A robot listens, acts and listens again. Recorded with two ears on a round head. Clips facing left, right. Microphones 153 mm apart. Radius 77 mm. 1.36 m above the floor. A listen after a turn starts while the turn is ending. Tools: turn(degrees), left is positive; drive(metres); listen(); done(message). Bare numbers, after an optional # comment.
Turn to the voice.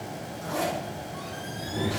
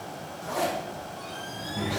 # The child speaking: about 45° left or 135° left.
turn(45)
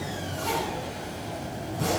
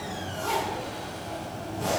listen()
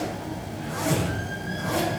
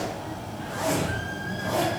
done("Facing the child speaking, over 4 m away.")